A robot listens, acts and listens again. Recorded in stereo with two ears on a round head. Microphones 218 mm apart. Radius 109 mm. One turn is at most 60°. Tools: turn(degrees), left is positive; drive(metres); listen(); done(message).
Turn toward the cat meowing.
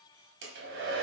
listen()
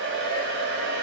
listen()
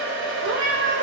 turn(degrees=-50)
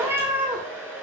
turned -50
done("Facing the cat meowing, 1 to 2 m away.")